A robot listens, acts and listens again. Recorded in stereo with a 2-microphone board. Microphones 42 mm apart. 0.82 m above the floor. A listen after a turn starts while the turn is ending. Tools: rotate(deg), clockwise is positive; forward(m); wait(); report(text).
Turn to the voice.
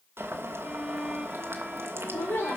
rotate(-65)
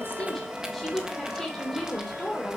report("Found it: a woman speaking, straight ahead, 2 to 4 m away.")